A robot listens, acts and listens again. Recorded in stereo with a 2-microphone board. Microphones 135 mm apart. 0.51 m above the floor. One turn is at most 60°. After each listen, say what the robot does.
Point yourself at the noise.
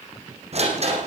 Turn 50° right.
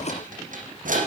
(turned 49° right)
Turn 60° right.
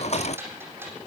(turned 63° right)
Turn 15° right.
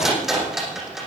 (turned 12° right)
Found it: a rattle, straight ahead.